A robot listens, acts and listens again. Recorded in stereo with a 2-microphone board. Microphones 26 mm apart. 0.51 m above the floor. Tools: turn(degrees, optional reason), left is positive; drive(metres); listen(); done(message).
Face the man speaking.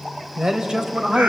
turn(degrees=-30, reason="The man speaking: about 30° right or 150° right.")
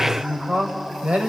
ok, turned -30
turn(degrees=-115, reason="So it is at 115° right.")
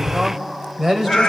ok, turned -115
turn(degrees=-15, reason="The man speaking is now 15° right.")
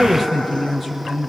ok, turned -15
done("Facing the man speaking, 2 to 4 m away.")